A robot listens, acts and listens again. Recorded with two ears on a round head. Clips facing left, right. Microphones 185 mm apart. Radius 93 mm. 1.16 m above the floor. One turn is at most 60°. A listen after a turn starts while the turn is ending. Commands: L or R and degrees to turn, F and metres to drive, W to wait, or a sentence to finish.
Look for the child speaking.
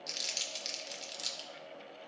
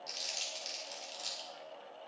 W
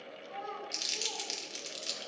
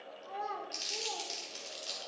R60
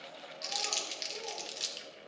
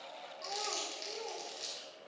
W
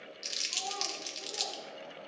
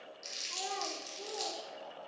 W
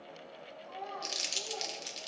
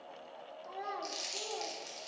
R60
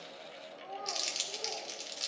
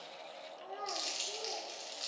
R25
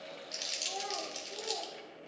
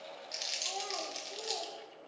W
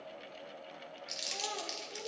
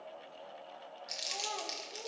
W
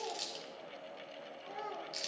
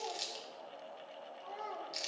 L10
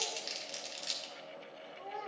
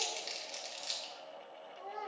Found it: a child speaking, straight ahead, 2 to 4 m away.